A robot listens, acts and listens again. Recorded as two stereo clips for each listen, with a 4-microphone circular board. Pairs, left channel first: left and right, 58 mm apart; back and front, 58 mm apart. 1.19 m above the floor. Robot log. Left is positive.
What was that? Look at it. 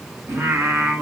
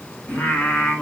note: The singing: 130° right.
cmd yaw -130
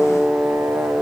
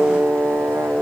note: The singing is now 55° right.
cmd yaw -55
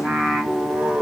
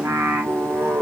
note: The singing is now 35° right.
cmd yaw -35
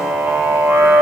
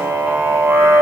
note: The singing is now 40° right.
cmd yaw -40
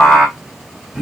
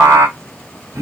note: The singing is now 10° right.
cmd yaw -10
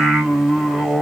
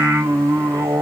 end: Found it: singing, straight ahead.